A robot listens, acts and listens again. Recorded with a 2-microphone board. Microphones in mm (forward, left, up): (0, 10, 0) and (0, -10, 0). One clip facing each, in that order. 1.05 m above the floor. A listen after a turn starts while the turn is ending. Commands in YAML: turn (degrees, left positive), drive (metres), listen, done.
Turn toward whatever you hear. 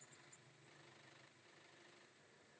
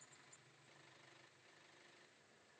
listen: true
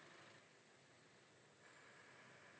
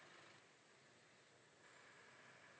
listen: true
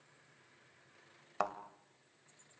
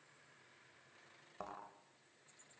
turn: 75
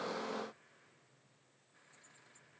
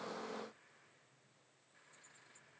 listen: true
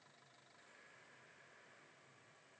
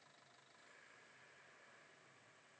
done: "I heard a thud, but can't make it out now. It was about straight ahead or 30° left."